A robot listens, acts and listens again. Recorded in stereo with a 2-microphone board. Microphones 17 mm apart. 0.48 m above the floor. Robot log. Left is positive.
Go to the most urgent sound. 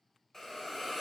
cmd idle
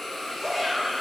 cmd yaw -30
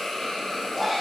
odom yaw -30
note: So it is at 15° left.
cmd yaw +15
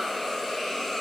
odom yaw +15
cmd idle
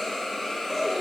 cmd fwd 1.0
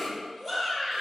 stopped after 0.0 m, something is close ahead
end: Blocked. The shout is further on, straight ahead.